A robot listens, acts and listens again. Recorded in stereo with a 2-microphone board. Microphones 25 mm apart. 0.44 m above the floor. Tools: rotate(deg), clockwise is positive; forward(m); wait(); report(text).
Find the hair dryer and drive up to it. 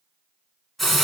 wait()
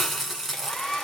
rotate(-30)
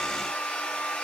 rotate(-120)
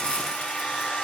rotate(-35)
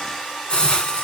rotate(-10)
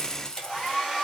forward(1.0)
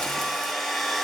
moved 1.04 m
forward(1.0)
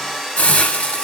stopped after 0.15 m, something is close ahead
report("Arrived at the hair dryer, straight ahead.")